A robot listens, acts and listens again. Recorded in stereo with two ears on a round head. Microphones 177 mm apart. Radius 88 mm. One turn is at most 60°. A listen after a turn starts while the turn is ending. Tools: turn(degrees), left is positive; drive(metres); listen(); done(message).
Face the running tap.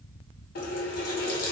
turn(degrees=45)
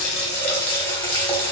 turn(degrees=15)
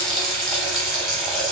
done("Found it: a running tap, straight ahead.")